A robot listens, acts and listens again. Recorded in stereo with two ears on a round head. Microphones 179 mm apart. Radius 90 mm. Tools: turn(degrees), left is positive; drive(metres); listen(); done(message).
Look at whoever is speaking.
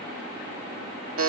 listen()
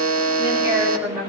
turn(degrees=-30)
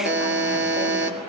listen()
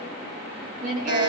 turn(degrees=-135)
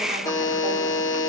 listen()
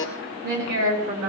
turn(degrees=-55)
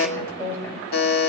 turn(degrees=15)
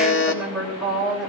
done("Facing the woman speaking, over 4 m away.")